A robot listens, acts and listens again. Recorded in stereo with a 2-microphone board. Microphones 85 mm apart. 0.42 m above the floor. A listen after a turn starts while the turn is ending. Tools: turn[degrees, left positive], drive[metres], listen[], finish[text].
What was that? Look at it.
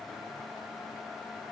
Action: listen[]
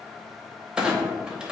Action: turn[-30]
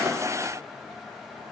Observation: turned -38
Action: listen[]
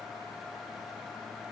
Action: finish[I heard a clunk, but can't make it out now. It was about 25° left or 130° right.]